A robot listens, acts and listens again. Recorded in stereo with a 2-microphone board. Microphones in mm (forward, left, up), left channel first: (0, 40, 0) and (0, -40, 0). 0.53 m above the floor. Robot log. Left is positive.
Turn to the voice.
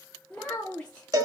cmd yaw +30
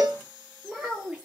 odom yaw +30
note: So it is at 15° right.
cmd yaw -15
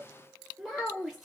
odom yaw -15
end: Facing the child speaking, under 1 m away.